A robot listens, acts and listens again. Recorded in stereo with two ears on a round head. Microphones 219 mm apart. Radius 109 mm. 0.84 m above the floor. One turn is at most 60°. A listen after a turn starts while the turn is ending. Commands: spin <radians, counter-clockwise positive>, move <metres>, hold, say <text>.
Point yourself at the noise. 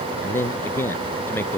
spin 0.52
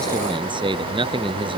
spin -0.35
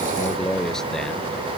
say Facing the man speaking.